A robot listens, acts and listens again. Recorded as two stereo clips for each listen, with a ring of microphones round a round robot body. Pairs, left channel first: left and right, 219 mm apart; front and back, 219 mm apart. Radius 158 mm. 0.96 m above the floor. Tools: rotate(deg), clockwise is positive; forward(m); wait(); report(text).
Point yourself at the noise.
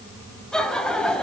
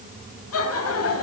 report("Found it: laughter, straight ahead, over 4 m away.")